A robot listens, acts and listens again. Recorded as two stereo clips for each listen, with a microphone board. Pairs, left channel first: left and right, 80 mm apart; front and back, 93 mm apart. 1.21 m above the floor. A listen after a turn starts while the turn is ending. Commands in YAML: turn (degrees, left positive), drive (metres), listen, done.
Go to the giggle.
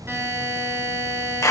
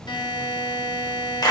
listen: true
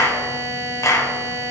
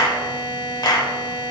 listen: true
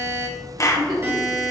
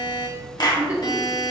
turn: -105
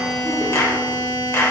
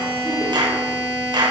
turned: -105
listen: true
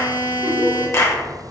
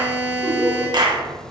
listen: true
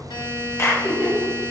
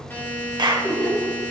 drive: 1.0
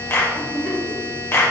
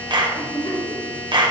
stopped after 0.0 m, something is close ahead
done: "Blocked. The giggle is further on, straight ahead."